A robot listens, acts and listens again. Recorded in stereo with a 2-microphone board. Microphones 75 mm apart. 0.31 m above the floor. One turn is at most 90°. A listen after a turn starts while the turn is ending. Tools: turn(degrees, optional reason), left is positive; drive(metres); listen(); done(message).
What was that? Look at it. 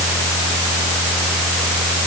listen()
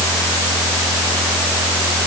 listen()
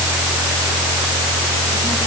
done("I can't make out anything to turn to.")